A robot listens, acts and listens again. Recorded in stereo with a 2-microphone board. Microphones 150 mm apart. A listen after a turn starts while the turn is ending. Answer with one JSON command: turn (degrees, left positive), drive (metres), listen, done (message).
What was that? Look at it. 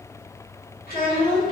{"turn": 65}
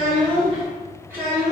{"turn": -20}
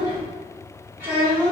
{"turn": -20}
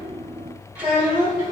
{"turn": -20}
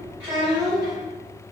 {"turn": -15}
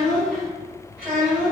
{"done": "Found it: a child speaking, straight ahead."}